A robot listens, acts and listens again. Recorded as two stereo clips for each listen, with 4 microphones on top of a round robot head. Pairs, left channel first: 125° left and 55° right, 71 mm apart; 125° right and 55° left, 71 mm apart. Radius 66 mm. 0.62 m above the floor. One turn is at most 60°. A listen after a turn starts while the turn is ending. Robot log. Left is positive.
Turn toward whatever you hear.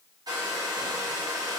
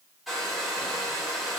note: The hair dryer: 35° right.
cmd yaw -35
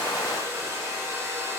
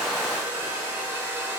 note: The hair dryer is now 10° right.
cmd yaw -10
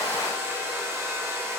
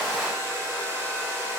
end: Facing the hair dryer.